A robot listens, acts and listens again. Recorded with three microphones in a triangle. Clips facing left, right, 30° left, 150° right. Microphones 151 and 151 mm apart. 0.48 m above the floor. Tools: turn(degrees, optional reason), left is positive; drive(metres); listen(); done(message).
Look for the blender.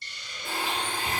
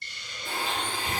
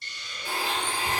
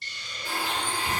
turn(degrees=100, reason="The blender: 100° left.")
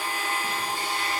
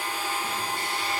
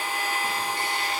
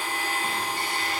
turn(degrees=20, reason="The blender is now 20° left.")
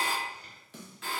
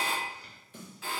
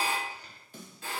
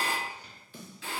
done("Facing the blender.")